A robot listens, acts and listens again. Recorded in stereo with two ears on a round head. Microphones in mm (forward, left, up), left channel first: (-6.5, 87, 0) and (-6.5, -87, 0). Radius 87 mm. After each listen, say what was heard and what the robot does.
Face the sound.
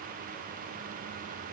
Keep listening.
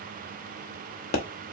The pop: about 50° left or 130° left. Turn 50° left.
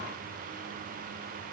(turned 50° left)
Keep listening.
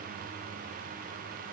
I heard a pop, but can't make it out now. It was about straight ahead or 80° left.